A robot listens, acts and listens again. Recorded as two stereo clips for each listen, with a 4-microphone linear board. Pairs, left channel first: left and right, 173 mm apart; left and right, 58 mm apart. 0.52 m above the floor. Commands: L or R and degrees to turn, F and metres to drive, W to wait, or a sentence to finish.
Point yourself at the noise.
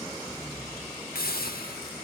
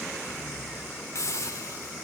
L60
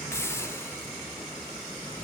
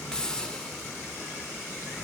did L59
L15
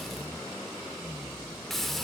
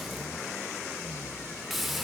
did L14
Facing the hiss, under 1 m away.